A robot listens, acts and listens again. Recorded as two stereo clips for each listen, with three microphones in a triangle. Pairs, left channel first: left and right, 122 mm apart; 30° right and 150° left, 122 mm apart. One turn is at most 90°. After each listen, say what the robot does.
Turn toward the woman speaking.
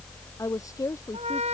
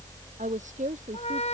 Turn 90° left.
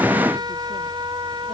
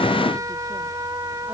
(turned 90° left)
Turn 65° left.
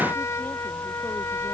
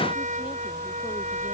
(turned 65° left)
Keep listening.
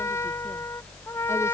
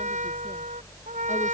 I heard a woman speaking from this way, but can't make it out now.